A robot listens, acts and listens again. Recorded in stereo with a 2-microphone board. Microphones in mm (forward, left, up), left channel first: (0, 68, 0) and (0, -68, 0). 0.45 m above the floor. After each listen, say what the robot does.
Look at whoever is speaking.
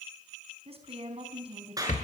Turn 45° right.
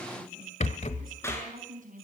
Turn 85° right.
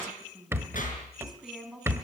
Facing the woman speaking, over 4 m away.